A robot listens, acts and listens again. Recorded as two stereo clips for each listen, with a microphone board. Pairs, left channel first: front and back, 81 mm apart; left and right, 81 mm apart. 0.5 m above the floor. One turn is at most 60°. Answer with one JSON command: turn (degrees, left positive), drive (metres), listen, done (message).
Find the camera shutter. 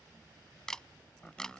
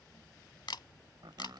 {"turn": 60}
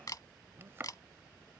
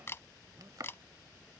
{"turn": 35}
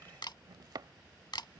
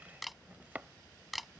{"done": "Facing the camera shutter."}